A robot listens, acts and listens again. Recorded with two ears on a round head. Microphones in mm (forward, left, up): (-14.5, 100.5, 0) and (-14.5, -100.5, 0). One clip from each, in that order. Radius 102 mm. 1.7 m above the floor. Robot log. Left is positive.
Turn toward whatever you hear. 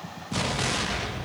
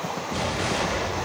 note: The explosion: about 60° left or 120° left.
cmd yaw +60
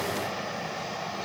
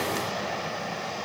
cmd idle
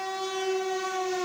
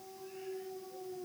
end: I heard an explosion, but can't make it out now. It was about straight ahead or 60° left.